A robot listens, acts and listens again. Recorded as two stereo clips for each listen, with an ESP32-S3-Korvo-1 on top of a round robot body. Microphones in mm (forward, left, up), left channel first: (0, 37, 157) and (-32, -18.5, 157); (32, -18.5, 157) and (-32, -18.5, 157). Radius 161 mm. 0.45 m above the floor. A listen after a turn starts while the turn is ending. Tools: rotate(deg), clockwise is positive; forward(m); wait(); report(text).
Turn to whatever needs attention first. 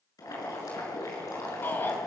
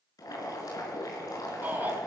rotate(-115)
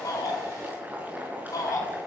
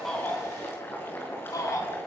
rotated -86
rotate(-30)
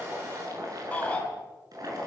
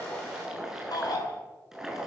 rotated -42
rotate(10)
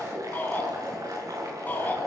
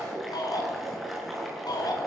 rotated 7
report("Facing the shout.")